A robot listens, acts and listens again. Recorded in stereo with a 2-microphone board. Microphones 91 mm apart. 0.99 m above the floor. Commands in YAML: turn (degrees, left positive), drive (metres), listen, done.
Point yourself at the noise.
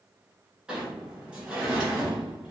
turn: -30
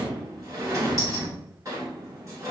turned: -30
turn: -140
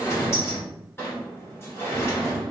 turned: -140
turn: 30
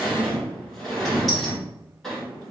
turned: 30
done: "Facing the sliding door."